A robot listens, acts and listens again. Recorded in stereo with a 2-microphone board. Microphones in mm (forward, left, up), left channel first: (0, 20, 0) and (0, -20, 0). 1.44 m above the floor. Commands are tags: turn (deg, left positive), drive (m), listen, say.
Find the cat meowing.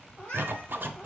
<turn deg="25"/>
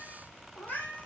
<turn deg="125"/>
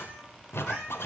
<turn deg="-15"/>
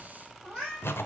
<turn deg="-10"/>
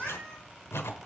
<say>Facing the cat meowing, over 4 m away.</say>